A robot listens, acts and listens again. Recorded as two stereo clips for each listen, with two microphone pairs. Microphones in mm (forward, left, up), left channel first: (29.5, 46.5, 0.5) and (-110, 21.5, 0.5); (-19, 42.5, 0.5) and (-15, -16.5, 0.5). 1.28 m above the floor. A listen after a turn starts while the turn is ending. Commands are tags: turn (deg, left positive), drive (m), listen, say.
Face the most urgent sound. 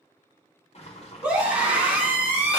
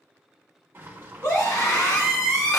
<turn deg="110"/>
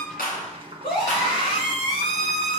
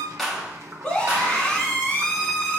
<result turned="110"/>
<turn deg="20"/>
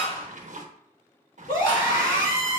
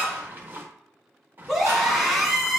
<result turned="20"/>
<say>Facing the scream.</say>